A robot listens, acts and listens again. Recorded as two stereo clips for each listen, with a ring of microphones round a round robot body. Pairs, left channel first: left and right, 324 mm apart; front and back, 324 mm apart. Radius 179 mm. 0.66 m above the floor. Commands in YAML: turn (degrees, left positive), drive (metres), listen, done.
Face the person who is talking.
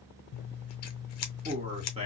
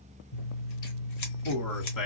turn: -20
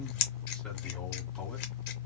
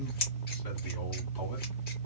listen: true
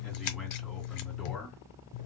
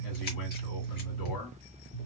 done: "Facing the man speaking."